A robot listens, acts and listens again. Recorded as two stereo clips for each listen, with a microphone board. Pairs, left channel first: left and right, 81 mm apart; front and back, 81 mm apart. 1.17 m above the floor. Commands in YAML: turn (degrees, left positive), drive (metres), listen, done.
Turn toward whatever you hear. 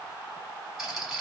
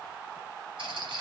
turn: -175
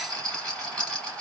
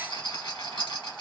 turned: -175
turn: 10
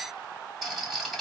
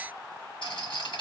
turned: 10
done: "Facing the rattle."